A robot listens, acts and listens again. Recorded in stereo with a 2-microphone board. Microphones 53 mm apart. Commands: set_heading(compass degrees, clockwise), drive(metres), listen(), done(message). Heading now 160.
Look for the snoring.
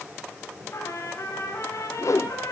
listen()
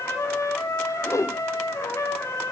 listen()
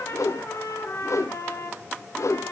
done("I can't make out snoring to turn to.")